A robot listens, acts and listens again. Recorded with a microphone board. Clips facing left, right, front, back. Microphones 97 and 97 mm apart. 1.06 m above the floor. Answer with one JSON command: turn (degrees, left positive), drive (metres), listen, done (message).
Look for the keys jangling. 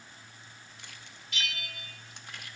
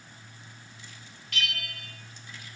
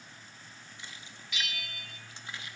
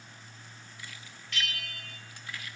{"listen": true}
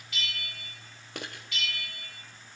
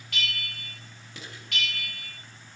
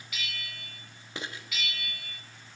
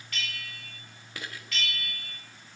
{"turn": 65}
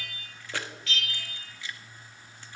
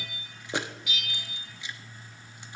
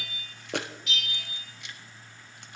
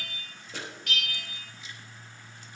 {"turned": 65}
{"turn": -20}
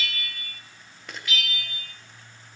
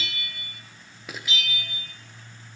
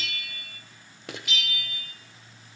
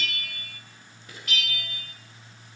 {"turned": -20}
{"done": "Found it: keys jangling, straight ahead, under 1 m away."}